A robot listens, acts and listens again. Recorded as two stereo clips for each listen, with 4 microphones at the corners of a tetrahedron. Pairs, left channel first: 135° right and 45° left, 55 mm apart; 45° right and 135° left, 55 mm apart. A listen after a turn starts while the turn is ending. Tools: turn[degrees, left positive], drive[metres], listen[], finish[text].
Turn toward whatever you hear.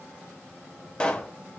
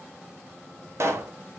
Thought: The pop: 160° left.
Action: turn[160]
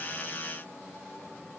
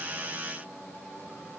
Action: finish[I heard a pop from this way, but can't make it out now.]